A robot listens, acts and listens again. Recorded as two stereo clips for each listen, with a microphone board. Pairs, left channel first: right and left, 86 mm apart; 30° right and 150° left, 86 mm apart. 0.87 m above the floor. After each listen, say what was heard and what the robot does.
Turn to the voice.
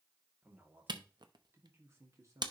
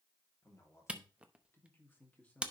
The man speaking: 40° left. Turn 40° left.
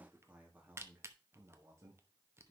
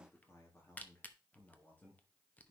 The man speaking is now 40° left. Turn 40° left.
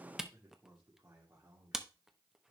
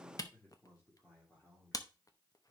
The man speaking is now 40° left. Turn 40° left.
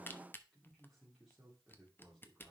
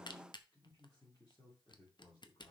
Found it: a man speaking, straight ahead.